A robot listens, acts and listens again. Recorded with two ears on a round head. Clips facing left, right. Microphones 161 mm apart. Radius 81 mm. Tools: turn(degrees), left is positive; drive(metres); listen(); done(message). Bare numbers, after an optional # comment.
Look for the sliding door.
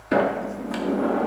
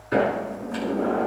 turn(90)
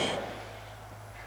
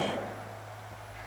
listen()
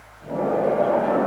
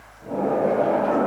done("Facing the sliding door.")